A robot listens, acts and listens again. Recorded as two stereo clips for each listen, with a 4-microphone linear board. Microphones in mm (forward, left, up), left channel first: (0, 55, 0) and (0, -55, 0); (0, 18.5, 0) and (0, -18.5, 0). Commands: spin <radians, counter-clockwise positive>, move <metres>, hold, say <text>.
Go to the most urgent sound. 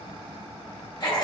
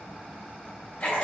hold
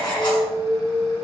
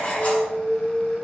spin 0.52
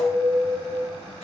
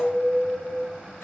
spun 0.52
spin 2.53
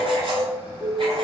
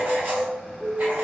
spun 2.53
spin -0.26
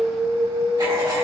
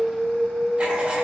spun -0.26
move 1.0
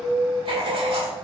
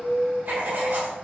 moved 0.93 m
move 1.0
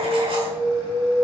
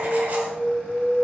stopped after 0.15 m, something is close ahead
say Arrived at the alarm, straight ahead.